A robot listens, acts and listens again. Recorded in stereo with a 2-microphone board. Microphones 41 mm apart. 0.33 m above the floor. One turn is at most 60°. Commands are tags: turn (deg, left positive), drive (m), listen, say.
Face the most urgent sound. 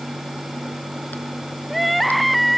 <turn deg="30"/>
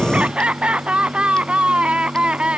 <turn deg="-30"/>
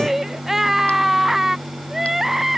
<turn deg="-10"/>
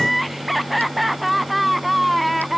<say>Facing the crying.</say>